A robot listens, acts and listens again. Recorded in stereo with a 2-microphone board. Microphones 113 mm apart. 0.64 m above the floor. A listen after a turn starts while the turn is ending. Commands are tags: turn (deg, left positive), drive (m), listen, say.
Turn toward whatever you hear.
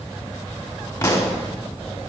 <turn deg="30"/>
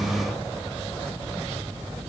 <listen/>
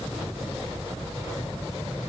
<say>I heard a pop, but can't make it out now. It was about straight ahead or 120° left.</say>